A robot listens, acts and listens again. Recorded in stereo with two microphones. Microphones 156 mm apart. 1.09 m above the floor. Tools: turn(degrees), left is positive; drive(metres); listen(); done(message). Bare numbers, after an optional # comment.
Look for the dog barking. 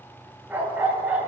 turn(-30)
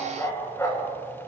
# So it is at 20° left.
turn(20)
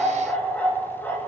# The dog barking is now 15° left.
turn(15)
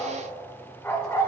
# The dog barking is now 20° left.
turn(20)
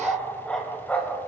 # The dog barking is now 15° left.
turn(15)
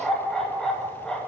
done("Found it: a dog barking, straight ahead, 2 to 4 m away.")